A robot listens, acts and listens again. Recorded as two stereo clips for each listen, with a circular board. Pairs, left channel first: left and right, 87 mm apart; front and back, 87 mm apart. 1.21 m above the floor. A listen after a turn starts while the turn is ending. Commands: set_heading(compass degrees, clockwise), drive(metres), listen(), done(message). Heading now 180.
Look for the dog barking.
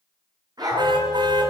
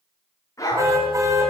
set_heading(230)
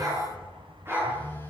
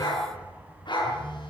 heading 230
set_heading(260)
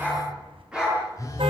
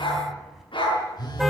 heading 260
set_heading(270)
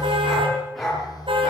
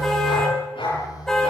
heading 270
done("Facing the dog barking, over 4 m away.")